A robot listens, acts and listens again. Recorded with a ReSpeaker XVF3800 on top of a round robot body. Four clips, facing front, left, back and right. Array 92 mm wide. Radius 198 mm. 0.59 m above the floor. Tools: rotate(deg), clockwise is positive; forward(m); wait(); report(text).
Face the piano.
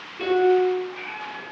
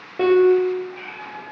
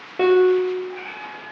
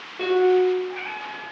rotate(-155)
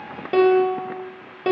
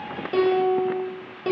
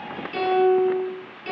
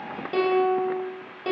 report("Facing the piano.")